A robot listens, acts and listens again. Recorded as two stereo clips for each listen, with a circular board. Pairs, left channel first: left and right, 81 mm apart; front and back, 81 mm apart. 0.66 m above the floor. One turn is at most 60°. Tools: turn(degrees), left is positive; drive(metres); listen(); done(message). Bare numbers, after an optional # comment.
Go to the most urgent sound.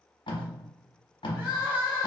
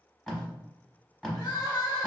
# The crying: 30° right.
turn(-30)
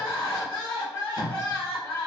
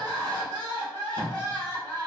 # The crying is now 10° left.
turn(10)
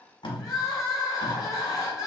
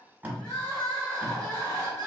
drive(1.0)
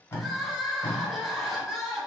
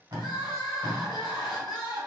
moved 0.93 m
drive(1.0)
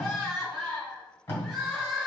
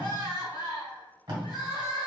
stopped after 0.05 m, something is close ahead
done("I am next to the crying.")